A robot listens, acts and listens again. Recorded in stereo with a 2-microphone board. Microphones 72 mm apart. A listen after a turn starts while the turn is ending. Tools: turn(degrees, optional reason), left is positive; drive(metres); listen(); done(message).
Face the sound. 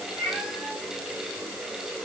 turn(degrees=35, reason="The cat meowing: about 35° left or 145° left.")
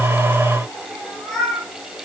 turn(degrees=10, reason="So it is at 10° left.")
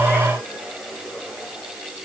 listen()
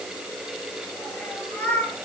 turn(degrees=20, reason="The cat meowing is now 20° left.")
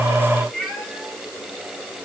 done("Found it: a cat meowing, straight ahead, 2 to 4 m away.")